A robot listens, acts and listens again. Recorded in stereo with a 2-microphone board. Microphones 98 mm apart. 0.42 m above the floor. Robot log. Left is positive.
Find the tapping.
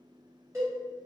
cmd idle
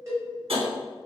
cmd yaw -90
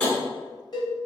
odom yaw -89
note: So it is at 15° left.
cmd yaw +15
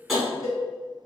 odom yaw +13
end: Found it: tapping, straight ahead.